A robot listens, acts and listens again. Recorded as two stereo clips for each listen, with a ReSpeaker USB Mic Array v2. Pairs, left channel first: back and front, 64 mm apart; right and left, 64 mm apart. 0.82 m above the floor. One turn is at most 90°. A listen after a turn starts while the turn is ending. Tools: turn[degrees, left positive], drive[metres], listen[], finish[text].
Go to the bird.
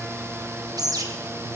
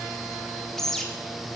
Action: drive[1.0]
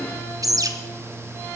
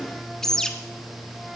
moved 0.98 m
Thought: The bird is now 10° right.
Action: turn[-10]
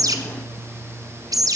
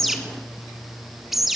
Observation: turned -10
Action: drive[1.0]
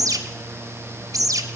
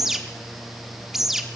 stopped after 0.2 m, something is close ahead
Action: finish[Arrived at the bird, straight ahead.]